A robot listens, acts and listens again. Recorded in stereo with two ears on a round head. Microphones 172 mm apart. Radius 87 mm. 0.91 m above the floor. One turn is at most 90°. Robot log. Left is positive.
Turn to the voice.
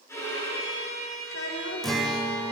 cmd yaw +90
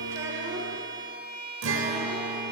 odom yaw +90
cmd idle
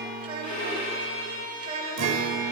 note: The child speaking is now 35° right.
cmd yaw -35
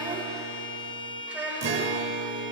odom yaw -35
note: The child speaking is now 10° right.
cmd yaw -10
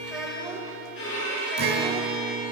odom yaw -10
end: Facing the child speaking.